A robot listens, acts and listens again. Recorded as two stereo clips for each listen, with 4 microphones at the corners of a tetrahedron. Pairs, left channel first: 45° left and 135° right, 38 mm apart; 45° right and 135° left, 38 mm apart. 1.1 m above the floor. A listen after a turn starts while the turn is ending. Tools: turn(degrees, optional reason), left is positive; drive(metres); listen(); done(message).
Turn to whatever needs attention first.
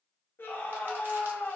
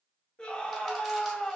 turn(degrees=20, reason="The scream: 20° left.")
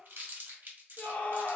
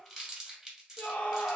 done("Facing the scream.")